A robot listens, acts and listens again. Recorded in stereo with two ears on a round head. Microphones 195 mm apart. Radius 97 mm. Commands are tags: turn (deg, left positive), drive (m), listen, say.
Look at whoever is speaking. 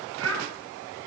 <turn deg="-65"/>
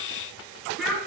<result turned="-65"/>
<say>Facing the child speaking, over 4 m away.</say>